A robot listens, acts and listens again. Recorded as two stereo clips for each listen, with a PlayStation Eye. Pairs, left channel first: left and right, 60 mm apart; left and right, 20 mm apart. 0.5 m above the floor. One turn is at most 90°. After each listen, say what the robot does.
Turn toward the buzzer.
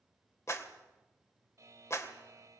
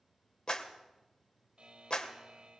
Turn 55° right.
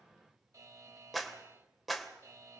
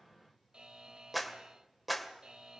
Turn 65° right.
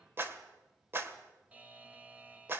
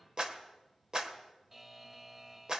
Turn 25° right.
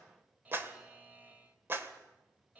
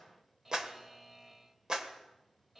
Turn 25° right.
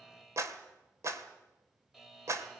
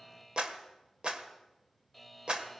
Facing the buzzer, 1 to 2 m away.